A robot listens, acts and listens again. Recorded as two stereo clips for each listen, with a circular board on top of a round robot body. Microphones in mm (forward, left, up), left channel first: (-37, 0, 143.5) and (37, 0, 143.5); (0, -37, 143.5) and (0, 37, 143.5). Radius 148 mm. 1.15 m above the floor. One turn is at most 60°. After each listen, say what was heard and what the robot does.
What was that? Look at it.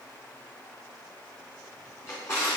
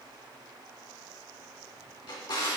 The drawer: 125° right. Turn 60° right.
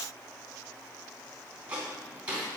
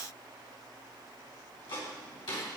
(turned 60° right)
The drawer is now 75° right. Turn 60° right.
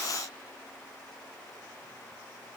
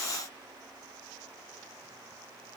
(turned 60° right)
Nothing new. It was at 15° right. Turn 15° right.
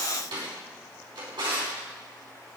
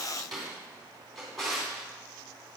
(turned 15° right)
Facing the drawer.